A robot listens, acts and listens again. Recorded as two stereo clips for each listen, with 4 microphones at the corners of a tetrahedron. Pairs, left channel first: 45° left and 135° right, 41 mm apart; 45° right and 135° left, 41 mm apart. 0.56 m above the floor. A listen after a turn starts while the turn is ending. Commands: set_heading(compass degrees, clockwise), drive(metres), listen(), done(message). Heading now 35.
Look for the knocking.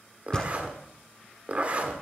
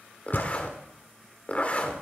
set_heading(55)
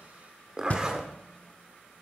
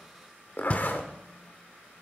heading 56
done("Found it: knocking, straight ahead, 1 to 2 m away.")